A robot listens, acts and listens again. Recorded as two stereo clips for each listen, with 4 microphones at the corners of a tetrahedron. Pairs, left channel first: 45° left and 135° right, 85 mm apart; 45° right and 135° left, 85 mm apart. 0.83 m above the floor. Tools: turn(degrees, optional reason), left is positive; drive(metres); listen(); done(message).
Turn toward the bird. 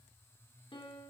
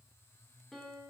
listen()
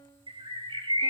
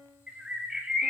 turn(degrees=-145, reason="The bird: 145° right.")
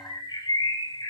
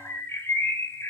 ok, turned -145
turn(degrees=10, reason="The bird is now 10° left.")
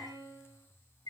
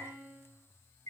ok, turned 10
done("Found it: a bird, straight ahead.")